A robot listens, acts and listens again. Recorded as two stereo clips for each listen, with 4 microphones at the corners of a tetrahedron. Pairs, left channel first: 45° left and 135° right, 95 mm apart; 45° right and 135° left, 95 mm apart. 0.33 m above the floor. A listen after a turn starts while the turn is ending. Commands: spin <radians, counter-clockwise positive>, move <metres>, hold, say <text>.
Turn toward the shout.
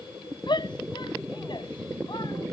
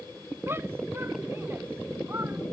spin 1.22
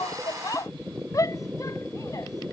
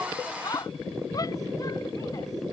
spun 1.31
say Facing the shout.